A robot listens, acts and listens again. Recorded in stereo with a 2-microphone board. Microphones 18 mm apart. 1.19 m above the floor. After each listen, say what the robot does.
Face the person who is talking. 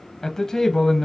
Turn 25° left.
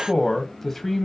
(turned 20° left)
Turn 10° left.
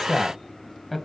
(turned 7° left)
Found it: a man speaking, straight ahead, 1 to 2 m away.